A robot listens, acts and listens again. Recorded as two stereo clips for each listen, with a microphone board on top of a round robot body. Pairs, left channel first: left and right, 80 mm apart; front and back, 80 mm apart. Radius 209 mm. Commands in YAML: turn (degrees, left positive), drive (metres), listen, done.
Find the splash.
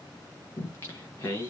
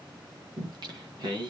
listen: true
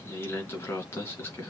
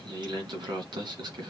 listen: true
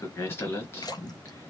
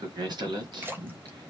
turn: 120
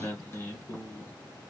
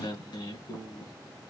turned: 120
done: "I heard a splash from this way, but can't make it out now."